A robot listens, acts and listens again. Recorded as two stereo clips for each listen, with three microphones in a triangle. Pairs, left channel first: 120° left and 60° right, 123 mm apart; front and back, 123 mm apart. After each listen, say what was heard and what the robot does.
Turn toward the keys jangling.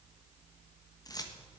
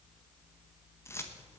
The keys jangling: 65° left. Turn 65° left.
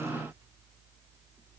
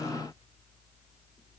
Keep listening.
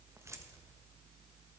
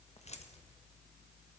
Facing the keys jangling, 1 to 2 m away.